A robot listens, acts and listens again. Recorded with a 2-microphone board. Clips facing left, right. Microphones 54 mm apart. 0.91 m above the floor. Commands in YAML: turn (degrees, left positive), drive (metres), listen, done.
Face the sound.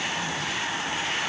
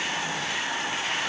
listen: true
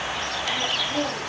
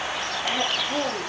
turn: -35
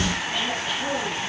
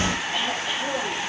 done: "Facing the throat clearing, over 4 m away."